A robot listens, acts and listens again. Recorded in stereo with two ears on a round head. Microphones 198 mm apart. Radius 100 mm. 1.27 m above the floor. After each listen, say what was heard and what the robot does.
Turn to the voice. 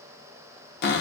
Keep listening.
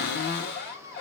Keep listening.
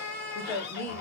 Turn 30° left.
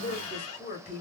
So it is at 140° left. Turn 140° left.
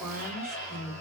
Found it: a woman speaking, straight ahead.